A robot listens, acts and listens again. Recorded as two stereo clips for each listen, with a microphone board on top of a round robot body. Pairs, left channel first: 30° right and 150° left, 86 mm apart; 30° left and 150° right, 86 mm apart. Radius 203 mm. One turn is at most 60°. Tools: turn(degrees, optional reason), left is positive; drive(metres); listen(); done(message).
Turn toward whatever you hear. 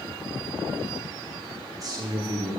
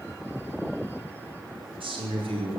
turn(degrees=-60, reason="The man speaking: 165° right.")
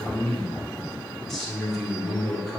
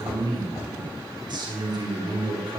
turn(degrees=-60, reason="The man speaking is now 120° right.")
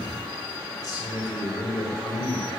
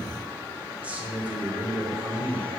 turn(degrees=-60, reason="The man speaking is now 75° right.")
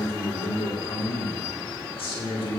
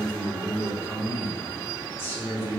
turn(degrees=-35, reason="The man speaking is now 35° right.")
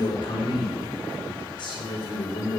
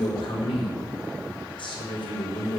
done("Found it: a man speaking, straight ahead.")